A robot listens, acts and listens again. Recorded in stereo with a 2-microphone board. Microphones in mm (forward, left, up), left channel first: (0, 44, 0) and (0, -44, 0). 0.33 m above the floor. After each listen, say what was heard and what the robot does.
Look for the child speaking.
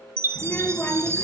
The child speaking: about 20° left or 160° left. Turn 20° left.
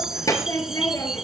The child speaking: about 35° left or 145° left. Turn 35° left.
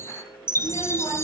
So it is at 115° left. Turn 115° left.
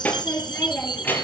The child speaking is now 20° left. Turn 20° left.
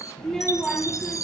Found it: a child speaking, straight ahead, over 4 m away.